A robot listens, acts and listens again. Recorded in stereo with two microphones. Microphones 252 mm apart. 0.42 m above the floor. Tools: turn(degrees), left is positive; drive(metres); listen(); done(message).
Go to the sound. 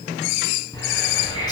turn(degrees=15)
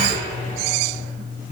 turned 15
turn(degrees=150)
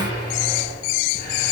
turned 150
turn(degrees=40)
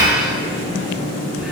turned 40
drive(metres=1.0)
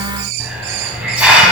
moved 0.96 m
drive(metres=1.0)
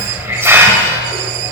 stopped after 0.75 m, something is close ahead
turn(degrees=-10)
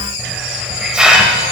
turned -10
done("I am next to the hiss.")